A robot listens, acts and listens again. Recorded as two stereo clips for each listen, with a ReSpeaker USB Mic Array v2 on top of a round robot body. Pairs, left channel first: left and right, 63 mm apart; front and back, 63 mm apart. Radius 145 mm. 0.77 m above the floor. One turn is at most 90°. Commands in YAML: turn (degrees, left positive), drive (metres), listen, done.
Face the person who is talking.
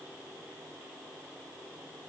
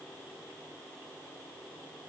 listen: true
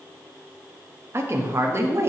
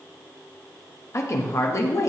turn: -40
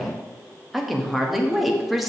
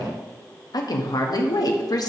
done: "Found it: a woman speaking, straight ahead."